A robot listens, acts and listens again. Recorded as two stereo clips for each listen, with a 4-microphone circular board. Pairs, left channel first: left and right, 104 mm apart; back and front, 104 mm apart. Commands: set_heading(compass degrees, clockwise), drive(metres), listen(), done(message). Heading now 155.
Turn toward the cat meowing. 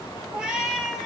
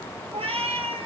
done("Facing the cat meowing, 2 to 4 m away.")